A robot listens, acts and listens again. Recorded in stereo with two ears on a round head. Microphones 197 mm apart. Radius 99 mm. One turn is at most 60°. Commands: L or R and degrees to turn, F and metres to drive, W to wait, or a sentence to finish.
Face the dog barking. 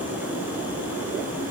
W
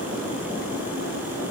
W
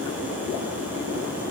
I can't make out a dog barking to turn to.